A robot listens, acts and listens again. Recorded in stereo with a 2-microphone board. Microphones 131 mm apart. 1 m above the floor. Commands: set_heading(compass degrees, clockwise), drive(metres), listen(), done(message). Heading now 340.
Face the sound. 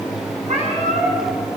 set_heading(45)
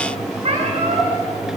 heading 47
set_heading(97)
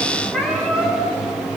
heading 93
done("Found it: a cat meowing, straight ahead.")